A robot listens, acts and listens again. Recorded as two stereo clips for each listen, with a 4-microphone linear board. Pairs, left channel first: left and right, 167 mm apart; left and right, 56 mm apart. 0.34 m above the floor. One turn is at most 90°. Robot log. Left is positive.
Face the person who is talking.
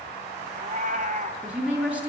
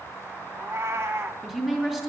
cmd yaw -30
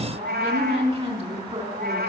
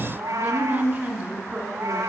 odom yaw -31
note: So it is at 140° right.
cmd yaw -90
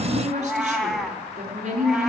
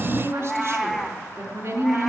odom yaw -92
note: The woman speaking is now 50° right.
cmd yaw -50
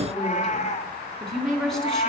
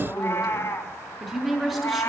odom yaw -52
end: Found it: a woman speaking, straight ahead.